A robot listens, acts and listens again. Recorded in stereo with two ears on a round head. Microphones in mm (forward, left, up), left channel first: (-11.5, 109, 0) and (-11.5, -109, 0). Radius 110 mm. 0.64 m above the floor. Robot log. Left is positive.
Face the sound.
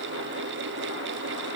cmd idle
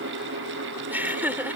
cmd yaw -30
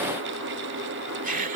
note: So it is at 145° right.
cmd yaw -145
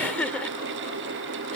end: Facing the laughter.